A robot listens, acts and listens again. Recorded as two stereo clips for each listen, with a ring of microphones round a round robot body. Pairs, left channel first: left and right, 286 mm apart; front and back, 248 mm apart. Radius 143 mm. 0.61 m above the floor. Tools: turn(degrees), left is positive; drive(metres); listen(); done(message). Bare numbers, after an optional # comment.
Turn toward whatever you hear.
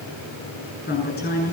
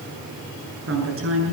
# The woman speaking: 150° left.
turn(150)
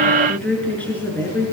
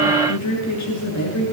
done("Facing the woman speaking.")